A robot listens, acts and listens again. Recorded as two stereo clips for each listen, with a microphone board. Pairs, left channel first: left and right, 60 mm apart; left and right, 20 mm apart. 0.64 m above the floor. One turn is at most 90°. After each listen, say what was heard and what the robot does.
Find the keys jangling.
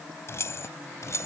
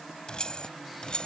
The keys jangling: about 55° left or 125° left. Turn 55° left.
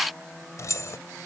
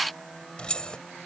So it is at 55° left. Turn 55° left.
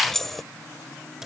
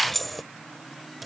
The keys jangling is now 10° right. Turn 10° right.
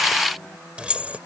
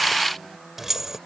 The keys jangling is now 20° right. Turn 20° right.
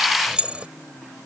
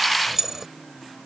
The keys jangling is now 20° right. Turn 20° right.
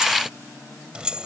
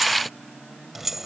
The keys jangling is now 15° right. Turn 15° right.
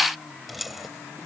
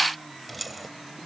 Found it: keys jangling, straight ahead.